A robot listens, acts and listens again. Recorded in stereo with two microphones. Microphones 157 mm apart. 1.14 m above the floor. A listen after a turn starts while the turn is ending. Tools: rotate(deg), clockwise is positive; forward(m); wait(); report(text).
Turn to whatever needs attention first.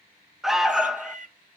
rotate(-30)
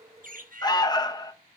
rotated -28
rotate(-155)
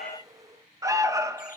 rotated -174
rotate(20)
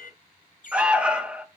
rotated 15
report("Found it: an alarm, straight ahead, under 1 m away.")